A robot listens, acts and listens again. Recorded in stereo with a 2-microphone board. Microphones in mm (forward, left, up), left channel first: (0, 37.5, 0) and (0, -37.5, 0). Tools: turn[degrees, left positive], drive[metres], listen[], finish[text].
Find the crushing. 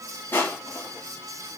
Thought: The crushing: about 25° left or 155° left.
Action: turn[25]
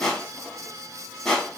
Action: finish[Found it: crushing, straight ahead, 1 to 2 m away.]